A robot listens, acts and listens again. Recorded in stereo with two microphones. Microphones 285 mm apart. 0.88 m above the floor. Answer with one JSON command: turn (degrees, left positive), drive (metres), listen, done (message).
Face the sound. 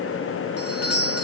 {"turn": 55}
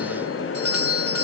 {"turn": 60}
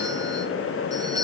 {"turn": -15}
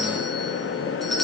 {"done": "Found it: a doorbell, straight ahead, 2 to 4 m away."}